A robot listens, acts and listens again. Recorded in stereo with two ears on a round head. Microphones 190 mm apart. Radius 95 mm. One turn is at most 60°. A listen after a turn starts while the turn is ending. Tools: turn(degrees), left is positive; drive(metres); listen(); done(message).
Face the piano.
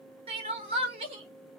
listen()
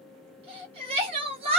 listen()
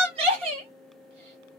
done("I can't make out a piano to turn to.")